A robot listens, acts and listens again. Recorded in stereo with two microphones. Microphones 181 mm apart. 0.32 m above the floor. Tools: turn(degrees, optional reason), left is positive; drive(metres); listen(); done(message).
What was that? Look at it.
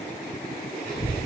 turn(degrees=55, reason="The child speaking: about 55° left or 125° left.")
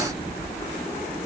turn(degrees=50, reason="So it is at 50° left.")
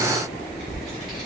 done("Facing the child speaking, 2 to 4 m away.")